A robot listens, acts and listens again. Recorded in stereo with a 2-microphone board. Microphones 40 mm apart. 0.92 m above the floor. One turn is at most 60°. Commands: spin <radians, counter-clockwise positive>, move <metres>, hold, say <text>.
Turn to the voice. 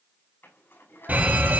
spin 1.05
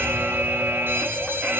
spin 0.52
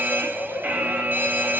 hold
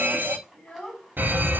spin 0.44
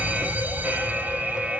hold
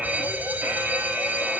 hold
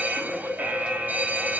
say I heard a child speaking from this way, but can't make it out now.